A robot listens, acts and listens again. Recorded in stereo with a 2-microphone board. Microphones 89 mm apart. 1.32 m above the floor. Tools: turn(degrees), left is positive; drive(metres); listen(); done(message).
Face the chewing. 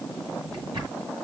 listen()
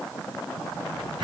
listen()
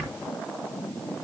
done("I can't make out chewing, only a drawer.")